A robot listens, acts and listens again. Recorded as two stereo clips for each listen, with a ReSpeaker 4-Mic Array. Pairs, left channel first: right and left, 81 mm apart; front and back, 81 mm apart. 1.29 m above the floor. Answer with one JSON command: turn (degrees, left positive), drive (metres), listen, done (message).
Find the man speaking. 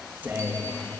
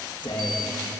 {"turn": 20}
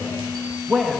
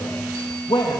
{"done": "Facing the man speaking, 2 to 4 m away."}